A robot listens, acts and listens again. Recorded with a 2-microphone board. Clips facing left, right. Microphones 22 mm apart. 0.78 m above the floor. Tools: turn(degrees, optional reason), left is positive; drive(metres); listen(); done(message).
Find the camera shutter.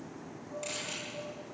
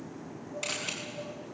turn(degrees=-40, reason="The camera shutter: about 40° right or 140° right.")
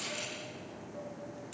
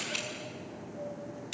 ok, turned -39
turn(degrees=-100, reason="So it is at 100° right.")
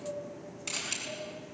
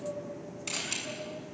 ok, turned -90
turn(degrees=-10, reason="The camera shutter is now 10° right.")
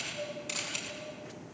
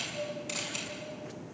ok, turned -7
done("Found it: a camera shutter, straight ahead.")